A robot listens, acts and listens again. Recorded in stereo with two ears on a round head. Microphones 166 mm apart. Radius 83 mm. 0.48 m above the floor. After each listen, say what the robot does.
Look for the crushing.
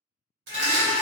Turn 60° right.
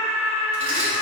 Keep listening.
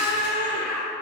Keep listening.
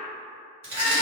Turn 45° right.
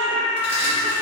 Keep listening.
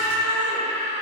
Keep listening.
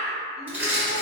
Turn 10° right.
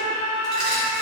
Keep listening.
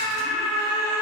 Keep listening.
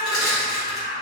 Facing the crushing.